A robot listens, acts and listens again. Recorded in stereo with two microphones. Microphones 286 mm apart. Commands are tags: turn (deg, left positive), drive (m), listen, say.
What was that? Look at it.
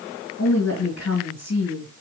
<turn deg="65"/>
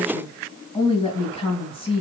<turn deg="25"/>
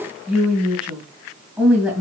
<say>Facing the woman speaking, 2 to 4 m away.</say>